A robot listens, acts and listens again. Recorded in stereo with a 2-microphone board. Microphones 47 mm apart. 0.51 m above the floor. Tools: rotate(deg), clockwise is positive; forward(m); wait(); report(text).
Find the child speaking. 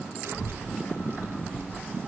rotate(65)
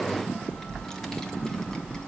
rotate(-20)
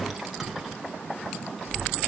report("Found it: a child speaking, straight ahead, 2 to 4 m away.")